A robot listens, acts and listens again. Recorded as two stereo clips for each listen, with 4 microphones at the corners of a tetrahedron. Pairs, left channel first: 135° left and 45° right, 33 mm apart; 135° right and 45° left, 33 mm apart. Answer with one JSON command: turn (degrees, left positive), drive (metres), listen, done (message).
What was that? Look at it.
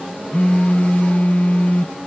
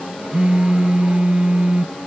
{"turn": 100}
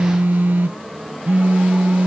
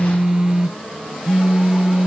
{"turn": -25}
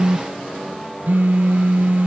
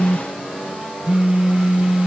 {"turn": -15}
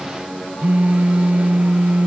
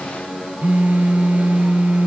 {"done": "Found it: a phone buzzing, straight ahead."}